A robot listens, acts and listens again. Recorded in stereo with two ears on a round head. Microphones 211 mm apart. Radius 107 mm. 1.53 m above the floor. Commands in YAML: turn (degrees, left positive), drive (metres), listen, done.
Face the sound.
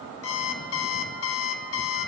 turn: 65
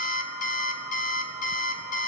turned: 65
turn: 35
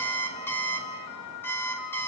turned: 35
turn: 10
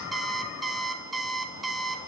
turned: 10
done: "Found it: an alarm clock, straight ahead, 1 to 2 m away."